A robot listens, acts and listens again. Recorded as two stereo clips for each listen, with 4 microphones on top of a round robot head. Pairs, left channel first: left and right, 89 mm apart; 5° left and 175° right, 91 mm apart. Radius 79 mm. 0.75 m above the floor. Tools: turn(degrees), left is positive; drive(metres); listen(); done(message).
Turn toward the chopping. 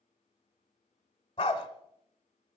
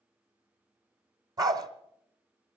listen()
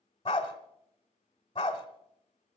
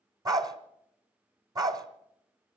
listen()
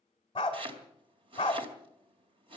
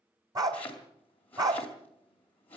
turn(degrees=-70)
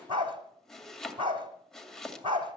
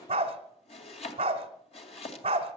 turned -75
done("Found it: chopping, straight ahead.")